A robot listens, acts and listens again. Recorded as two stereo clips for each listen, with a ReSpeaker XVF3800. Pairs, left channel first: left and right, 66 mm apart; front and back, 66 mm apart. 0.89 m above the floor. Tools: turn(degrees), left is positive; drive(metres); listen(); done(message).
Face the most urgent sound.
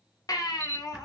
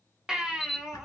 turn(degrees=100)
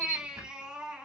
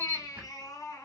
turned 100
turn(degrees=-15)
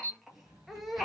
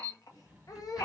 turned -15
done("Found it: a baby crying, straight ahead, under 1 m away.")